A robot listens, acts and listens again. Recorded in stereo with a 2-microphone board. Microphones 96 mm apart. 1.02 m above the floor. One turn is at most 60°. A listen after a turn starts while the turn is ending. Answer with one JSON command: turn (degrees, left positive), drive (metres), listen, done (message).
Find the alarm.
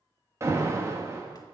{"turn": -30}
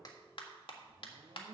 {"listen": true}
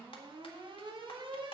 {"turn": -60}
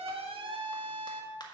{"turn": -60}
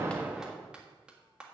{"listen": true}
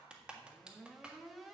{"listen": true}
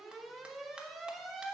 {"done": "Facing the alarm, 1 to 2 m away."}